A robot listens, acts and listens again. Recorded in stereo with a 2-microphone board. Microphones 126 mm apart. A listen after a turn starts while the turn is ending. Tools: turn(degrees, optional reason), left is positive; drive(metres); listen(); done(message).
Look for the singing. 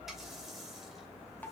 listen()
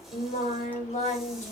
turn(degrees=70, reason="The singing: about 70° left or 110° left.")
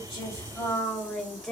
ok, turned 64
done("Found it: singing, straight ahead, 2 to 4 m away.")